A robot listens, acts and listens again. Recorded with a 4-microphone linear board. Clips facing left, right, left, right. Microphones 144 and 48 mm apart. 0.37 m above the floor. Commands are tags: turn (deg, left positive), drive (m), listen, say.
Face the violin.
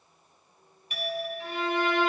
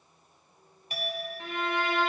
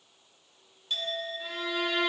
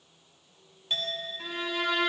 <turn deg="-70"/>
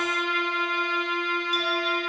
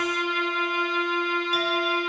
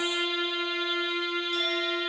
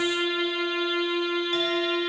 <turn deg="-20"/>
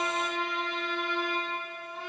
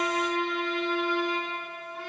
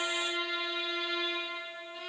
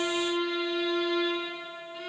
<say>Found it: a violin, straight ahead.</say>